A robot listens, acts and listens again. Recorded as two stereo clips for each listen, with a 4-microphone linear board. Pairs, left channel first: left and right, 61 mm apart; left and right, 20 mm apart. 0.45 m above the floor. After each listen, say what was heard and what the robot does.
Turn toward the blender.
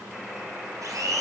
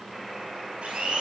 The blender: about 70° right or 110° right. Turn 70° right.
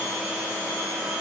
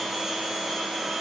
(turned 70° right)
So it is at 25° right. Turn 25° right.
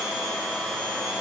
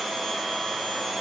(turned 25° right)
Facing the blender, 2 to 4 m away.